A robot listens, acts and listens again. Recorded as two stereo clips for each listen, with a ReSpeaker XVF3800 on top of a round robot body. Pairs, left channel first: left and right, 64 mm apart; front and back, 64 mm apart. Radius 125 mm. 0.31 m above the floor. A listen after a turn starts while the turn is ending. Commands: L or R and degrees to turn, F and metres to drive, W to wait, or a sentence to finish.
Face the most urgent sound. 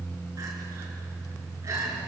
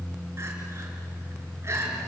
R130
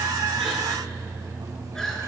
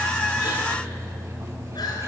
W
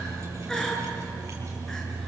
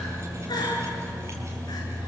L10
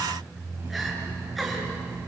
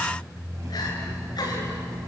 W
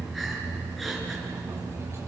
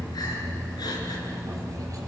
W
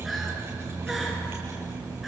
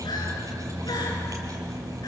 I heard crying from this way, but can't make it out now.